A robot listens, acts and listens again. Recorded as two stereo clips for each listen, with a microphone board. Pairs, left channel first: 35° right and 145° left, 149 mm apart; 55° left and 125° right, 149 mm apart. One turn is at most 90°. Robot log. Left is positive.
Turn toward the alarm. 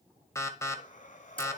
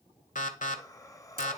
note: The alarm: 35° left.
cmd yaw +35
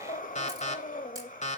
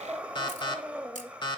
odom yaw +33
end: Facing the alarm.